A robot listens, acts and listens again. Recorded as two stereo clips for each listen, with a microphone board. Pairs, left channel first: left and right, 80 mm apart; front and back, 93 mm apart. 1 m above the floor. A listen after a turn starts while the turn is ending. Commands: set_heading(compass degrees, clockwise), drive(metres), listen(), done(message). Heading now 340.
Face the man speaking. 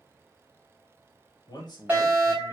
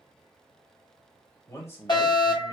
set_heading(280)
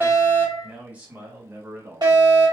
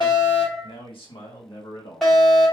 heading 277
set_heading(307)
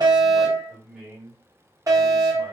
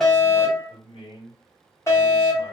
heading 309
set_heading(319)
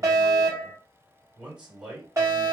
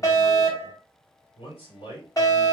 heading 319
set_heading(329)
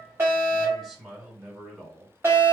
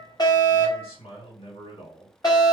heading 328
done("Facing the man speaking, 2 to 4 m away.")